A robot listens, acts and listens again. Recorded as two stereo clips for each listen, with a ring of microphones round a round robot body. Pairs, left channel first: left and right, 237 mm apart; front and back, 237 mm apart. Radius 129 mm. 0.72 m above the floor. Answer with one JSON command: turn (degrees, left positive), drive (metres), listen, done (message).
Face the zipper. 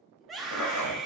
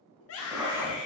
{"turn": 100}
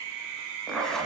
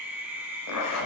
{"done": "Found it: a zipper, straight ahead, 1 to 2 m away."}